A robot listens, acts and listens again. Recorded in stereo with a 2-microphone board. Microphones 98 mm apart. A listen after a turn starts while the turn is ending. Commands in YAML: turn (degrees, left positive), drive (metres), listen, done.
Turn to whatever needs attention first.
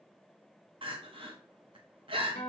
turn: -60
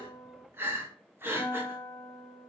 turn: -25
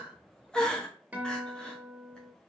turn: 10
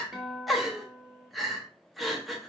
done: "Found it: crying, straight ahead, under 1 m away."